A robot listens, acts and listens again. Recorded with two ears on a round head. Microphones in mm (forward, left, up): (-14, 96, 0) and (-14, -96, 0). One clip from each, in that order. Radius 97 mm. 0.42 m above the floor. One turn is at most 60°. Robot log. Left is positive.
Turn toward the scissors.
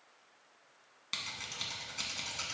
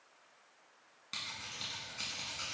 note: The scissors: about 30° left or 150° left.
cmd yaw +30
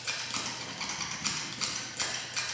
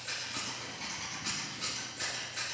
note: So it is at 120° left.
cmd yaw +60
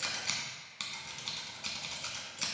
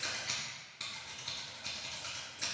note: The scissors is now 55° left.
cmd yaw +55
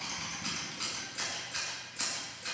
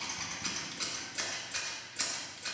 note: The scissors is now 10° right.
cmd yaw -10
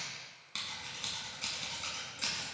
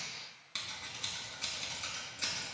end: Facing the scissors.